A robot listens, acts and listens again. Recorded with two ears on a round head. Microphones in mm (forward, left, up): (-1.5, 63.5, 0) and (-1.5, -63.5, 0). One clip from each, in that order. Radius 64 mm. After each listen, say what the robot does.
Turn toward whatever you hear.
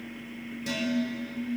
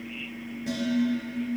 Turn 90° left.
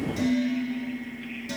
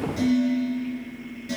Turn 15° left.
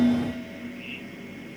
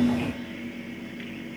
Found it: dishes clattering, straight ahead, over 4 m away.